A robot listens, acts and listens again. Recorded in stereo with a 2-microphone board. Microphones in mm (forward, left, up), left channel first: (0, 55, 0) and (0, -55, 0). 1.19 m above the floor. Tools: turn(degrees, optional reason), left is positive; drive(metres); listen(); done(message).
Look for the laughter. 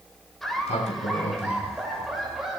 turn(degrees=-30)
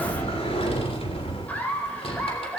turn(degrees=10, reason="So it is at 10° left.")
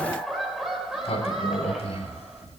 done("Found it: laughter, straight ahead, over 4 m away.")